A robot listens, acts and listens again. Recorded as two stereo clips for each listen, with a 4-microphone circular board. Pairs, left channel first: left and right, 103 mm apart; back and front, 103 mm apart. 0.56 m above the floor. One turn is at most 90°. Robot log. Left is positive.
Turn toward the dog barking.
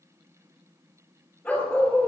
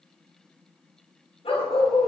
note: The dog barking: 170° left.
cmd yaw +90
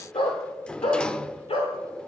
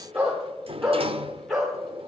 note: The dog barking is now 90° left.
cmd yaw +90
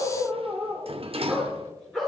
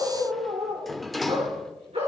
end: Facing the dog barking.